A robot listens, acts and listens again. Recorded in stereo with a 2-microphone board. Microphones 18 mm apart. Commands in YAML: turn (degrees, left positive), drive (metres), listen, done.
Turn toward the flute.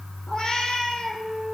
turn: 30
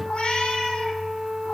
turn: -25
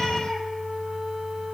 done: "Facing the flute, 2 to 4 m away."